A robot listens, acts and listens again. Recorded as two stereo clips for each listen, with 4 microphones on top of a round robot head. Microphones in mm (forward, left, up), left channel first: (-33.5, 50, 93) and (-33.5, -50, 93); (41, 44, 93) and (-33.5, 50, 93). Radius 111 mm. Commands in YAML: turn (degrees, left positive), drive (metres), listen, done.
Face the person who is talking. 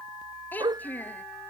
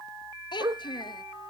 turn: 15
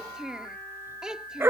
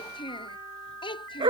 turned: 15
done: "Found it: a child speaking, straight ahead."